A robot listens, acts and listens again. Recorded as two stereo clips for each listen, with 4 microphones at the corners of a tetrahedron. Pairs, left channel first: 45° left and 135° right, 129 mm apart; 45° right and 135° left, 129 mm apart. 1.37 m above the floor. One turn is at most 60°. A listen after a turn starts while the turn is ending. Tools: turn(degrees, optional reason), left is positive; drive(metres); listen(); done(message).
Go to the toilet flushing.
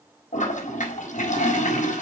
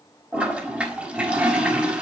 turn(degrees=55, reason="The toilet flushing: 55° left.")
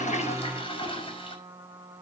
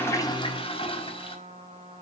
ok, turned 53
drive(metres=1.0)
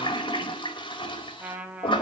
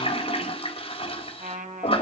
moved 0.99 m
drive(metres=1.0)
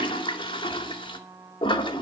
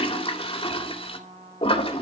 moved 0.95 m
drive(metres=1.0)
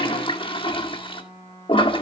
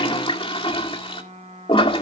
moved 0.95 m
drive(metres=1.0)
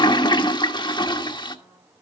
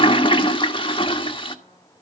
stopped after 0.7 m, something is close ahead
done("I am next to the toilet flushing.")